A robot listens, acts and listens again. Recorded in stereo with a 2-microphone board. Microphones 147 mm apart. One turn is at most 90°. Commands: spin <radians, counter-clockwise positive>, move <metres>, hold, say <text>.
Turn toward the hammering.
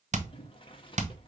spin -0.96
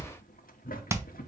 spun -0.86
spin -0.35
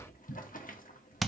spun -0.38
say Facing the hammering, under 1 m away.